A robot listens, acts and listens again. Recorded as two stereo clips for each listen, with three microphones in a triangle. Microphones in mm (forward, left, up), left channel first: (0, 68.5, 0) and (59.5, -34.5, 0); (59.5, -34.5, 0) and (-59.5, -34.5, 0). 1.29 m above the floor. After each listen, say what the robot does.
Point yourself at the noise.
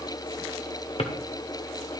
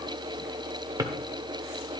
Turn 130° left.
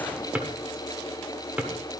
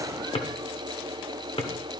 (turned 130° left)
Turn 15° left.
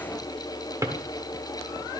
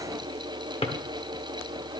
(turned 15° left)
Found it: a drawer, straight ahead.